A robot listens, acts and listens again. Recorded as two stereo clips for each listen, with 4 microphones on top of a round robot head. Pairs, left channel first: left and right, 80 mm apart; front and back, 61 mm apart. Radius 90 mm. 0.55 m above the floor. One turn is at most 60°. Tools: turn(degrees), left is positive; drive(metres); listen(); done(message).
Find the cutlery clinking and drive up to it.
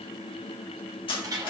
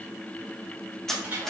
turn(degrees=60)
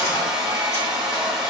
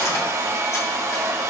turn(degrees=25)
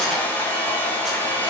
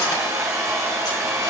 listen()
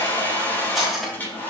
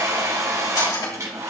drive(metres=1.0)
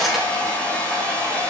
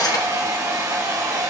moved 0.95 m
drive(metres=1.0)
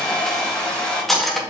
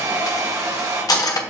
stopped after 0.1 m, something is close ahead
done("I am next to the cutlery clinking.")